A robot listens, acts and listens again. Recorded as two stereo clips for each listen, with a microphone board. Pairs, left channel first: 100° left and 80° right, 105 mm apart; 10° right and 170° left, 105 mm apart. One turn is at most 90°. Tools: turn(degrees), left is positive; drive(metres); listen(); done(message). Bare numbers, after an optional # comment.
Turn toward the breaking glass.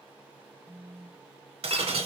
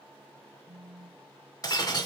# The breaking glass: 65° right.
turn(-65)
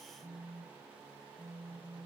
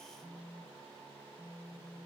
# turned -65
done("I heard breaking glass from this way, but can't make it out now.")